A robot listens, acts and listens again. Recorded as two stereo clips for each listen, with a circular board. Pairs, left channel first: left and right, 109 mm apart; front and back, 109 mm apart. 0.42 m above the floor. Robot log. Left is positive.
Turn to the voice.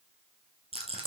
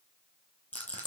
cmd idle
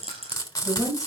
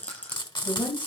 note: The woman speaking: 40° right.
cmd yaw -40
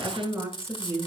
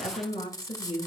note: The woman speaking is now 25° right.
cmd yaw -25
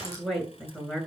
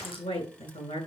end: Found it: a woman speaking, straight ahead, over 4 m away.